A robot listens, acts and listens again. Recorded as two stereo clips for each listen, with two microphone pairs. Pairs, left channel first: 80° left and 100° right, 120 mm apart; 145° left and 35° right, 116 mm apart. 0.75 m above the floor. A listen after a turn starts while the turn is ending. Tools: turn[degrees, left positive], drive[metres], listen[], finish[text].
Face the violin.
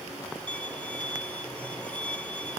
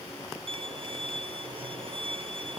Action: finish[Facing the violin.]